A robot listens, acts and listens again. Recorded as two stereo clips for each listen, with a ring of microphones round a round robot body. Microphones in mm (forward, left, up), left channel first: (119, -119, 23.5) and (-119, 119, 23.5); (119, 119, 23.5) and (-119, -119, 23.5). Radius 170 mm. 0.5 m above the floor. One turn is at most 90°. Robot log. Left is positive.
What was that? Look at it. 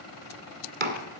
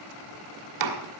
note: The chopping: 160° right.
cmd yaw -90
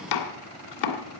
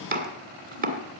note: The chopping is now 70° right.
cmd yaw -70
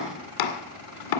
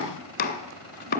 note: The chopping is now 20° right.
cmd yaw -20
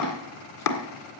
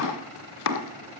end: Found it: chopping, straight ahead, 1 to 2 m away.